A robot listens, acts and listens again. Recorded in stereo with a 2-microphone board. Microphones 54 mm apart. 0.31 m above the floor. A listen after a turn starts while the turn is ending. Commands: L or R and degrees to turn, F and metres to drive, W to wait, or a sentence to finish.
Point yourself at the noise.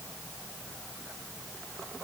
W
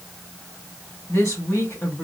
L50
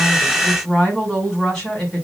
Facing the woman speaking.